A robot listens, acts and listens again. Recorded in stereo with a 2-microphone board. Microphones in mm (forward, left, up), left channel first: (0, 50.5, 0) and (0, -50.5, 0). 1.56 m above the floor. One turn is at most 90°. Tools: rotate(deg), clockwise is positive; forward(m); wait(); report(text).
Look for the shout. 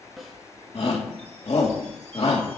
rotate(-90)
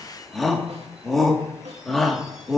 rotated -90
report("Found it: a shout, straight ahead.")